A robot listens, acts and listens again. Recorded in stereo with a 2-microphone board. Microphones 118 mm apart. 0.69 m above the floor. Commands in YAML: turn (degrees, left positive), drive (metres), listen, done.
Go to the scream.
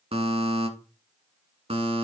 listen: true
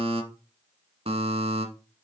listen: true
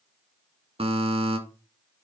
done: "I can't make out a scream, only a buzzer."